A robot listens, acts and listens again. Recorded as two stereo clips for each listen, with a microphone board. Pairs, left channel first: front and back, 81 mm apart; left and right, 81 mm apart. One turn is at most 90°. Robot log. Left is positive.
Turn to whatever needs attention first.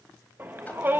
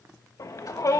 note: The shout: 120° left.
cmd yaw +90
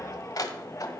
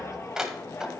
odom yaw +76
note: The shout is now 45° left.
cmd yaw +45
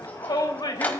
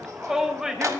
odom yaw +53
note: The shout is now 10° right.
cmd yaw -10
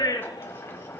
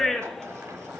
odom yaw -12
end: Facing the shout.